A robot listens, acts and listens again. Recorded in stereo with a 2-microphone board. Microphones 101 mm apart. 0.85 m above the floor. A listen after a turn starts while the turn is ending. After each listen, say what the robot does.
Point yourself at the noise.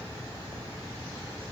Keep listening.
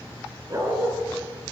Turn 35° right.
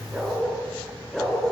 Found it: a dog barking, straight ahead.